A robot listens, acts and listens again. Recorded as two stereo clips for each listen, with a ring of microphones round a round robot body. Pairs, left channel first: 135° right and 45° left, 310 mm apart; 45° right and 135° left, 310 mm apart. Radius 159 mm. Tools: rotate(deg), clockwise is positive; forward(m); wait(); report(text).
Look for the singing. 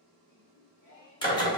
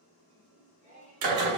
rotate(165)
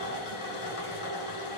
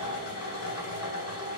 wait()
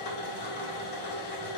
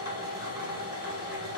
wait()
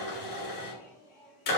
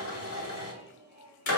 rotate(75)
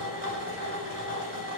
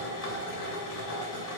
wait()
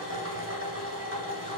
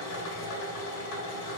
wait()
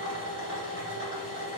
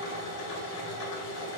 report("I heard singing from this way, but can't make it out now.")